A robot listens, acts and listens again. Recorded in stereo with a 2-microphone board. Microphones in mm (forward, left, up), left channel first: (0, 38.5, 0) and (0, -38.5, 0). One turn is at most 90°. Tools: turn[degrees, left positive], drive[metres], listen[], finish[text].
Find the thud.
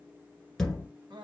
Action: turn[30]
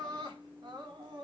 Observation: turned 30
Action: listen[]
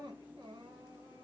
Action: finish[I heard a thud, but can't make it out now. It was about 25° right or 145° left.]